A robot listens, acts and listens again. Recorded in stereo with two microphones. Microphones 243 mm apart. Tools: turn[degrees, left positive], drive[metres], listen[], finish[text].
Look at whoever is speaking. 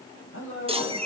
Thought: The man speaking: about 60° left or 120° left.
Action: turn[60]
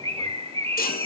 Action: listen[]
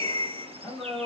Action: finish[Found it: a man speaking, straight ahead.]